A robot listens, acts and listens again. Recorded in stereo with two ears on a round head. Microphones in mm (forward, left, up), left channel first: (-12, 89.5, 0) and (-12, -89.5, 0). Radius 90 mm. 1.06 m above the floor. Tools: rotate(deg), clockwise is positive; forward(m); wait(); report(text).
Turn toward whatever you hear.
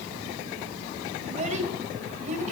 rotate(40)
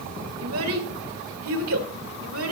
rotate(95)
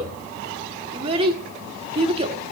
rotate(25)
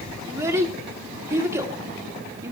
rotate(15)
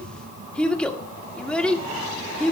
report("Found it: a child speaking, straight ahead.")